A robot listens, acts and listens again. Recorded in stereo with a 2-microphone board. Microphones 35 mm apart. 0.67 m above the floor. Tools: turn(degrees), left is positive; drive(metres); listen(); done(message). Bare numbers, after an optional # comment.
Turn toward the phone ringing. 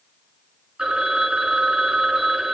# The phone ringing: about 25° right or 155° right.
turn(-25)
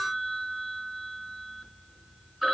done("Found it: a phone ringing, straight ahead, over 4 m away.")